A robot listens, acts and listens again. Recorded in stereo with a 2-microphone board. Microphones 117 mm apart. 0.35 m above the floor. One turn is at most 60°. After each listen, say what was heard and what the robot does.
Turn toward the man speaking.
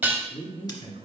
The man speaking: about 70° left or 110° left. Turn 60° left.
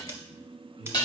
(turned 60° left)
Keep listening.
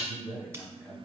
So it is at 20° left. Turn 20° left.
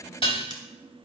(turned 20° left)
Keep listening.
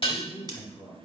Facing the man speaking, over 4 m away.